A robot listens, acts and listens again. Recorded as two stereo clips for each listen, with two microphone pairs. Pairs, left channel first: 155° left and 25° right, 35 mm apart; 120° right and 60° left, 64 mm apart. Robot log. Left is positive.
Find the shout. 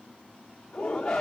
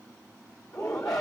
note: The shout: 130° right.
cmd yaw -130
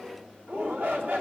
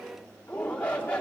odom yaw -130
note: The shout is now 50° right.
cmd yaw -50
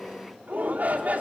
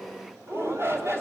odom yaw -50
note: The shout is now 10° left.
cmd yaw +10
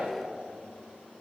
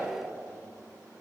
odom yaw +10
end: Facing the shout, 2 to 4 m away.